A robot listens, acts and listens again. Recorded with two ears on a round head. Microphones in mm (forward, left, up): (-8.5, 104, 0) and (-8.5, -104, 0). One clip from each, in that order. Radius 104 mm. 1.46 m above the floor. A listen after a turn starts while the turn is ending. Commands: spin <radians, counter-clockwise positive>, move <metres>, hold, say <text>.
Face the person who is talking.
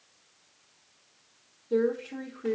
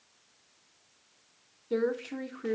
spin -1.13
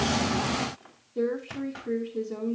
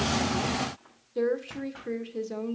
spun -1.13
spin -0.96
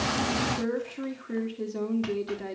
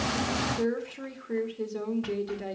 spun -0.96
say Found it: a woman speaking, straight ahead, 2 to 4 m away.